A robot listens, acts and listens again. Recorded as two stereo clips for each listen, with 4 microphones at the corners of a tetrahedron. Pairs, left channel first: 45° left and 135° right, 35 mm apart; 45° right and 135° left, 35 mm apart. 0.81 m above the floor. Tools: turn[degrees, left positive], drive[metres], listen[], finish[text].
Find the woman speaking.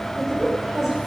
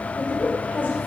Thought: The woman speaking: 60° right.
Action: turn[-60]
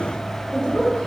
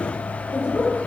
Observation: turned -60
Thought: The woman speaking is now 15° right.
Action: turn[-15]
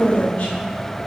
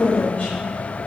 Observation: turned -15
Action: finish[Found it: a woman speaking, straight ahead.]